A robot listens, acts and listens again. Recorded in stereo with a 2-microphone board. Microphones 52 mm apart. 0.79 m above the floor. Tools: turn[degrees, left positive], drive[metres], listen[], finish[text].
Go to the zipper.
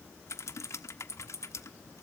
Action: listen[]
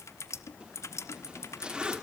Thought: The zipper: about 20° right or 160° right.
Action: turn[-20]
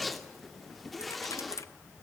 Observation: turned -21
Action: drive[1.0]
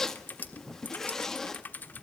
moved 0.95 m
Thought: The zipper is now 10° left.
Action: turn[10]
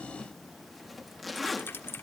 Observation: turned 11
Action: drive[1.0]
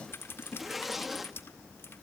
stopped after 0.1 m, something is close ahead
Action: finish[Arrived at the zipper, straight ahead.]